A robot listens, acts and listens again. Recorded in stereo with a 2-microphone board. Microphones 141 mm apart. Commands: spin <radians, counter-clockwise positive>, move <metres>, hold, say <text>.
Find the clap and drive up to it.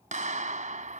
spin -1.05
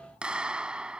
move 1.0
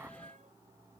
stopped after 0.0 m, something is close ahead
hold
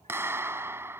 spin -0.35
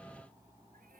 say Something is in my way. I am facing the clap but have not reached it.